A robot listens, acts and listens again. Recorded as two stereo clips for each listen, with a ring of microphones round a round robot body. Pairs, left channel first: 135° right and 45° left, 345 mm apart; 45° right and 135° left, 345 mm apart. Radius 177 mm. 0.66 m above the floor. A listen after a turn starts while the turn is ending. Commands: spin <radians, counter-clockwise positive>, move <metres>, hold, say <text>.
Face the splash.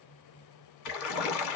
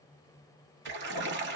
spin -2.97
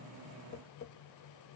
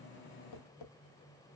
say Facing where the splash came from. I can't hear it now.